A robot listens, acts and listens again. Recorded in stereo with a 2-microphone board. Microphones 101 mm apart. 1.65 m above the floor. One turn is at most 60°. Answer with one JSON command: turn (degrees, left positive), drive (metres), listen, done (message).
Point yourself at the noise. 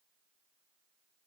{"listen": true}
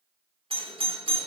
{"turn": -60}
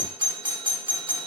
{"turn": -50}
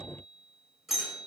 {"done": "Found it: a doorbell, straight ahead, 2 to 4 m away."}